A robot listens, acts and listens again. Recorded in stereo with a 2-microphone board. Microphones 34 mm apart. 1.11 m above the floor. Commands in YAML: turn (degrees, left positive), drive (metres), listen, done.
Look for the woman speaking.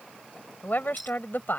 turn: 65
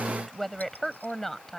done: "Found it: a woman speaking, straight ahead."